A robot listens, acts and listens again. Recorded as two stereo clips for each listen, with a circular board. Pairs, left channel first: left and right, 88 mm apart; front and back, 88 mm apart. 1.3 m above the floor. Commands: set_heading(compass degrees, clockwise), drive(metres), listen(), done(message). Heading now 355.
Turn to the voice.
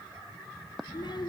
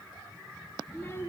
set_heading(290)
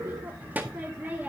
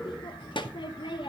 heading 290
set_heading(310)
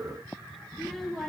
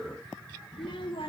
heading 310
done("Found it: a child speaking, straight ahead.")